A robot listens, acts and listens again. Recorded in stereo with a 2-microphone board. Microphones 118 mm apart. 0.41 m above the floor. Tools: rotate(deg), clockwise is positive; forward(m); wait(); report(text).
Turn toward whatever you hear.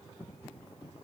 wait()
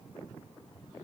wait()
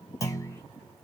rotate(-30)
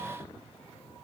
wait()
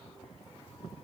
report("I heard a clunk, but can't make it out now. It was about straight ahead or 120° left.")